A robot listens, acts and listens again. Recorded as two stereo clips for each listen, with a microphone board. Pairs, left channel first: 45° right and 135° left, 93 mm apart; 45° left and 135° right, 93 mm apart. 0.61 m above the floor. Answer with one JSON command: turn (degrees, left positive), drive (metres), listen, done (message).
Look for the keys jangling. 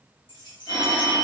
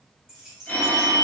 {"turn": -50}
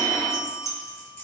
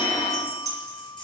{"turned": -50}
{"turn": 15}
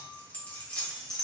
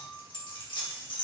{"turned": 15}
{"turn": 40}
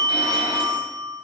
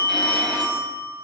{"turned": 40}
{"listen": true}
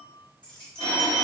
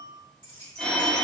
{"turn": 30}
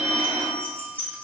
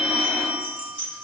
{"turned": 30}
{"turn": 20}
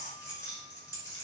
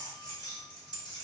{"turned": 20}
{"done": "Facing the keys jangling, 1 to 2 m away."}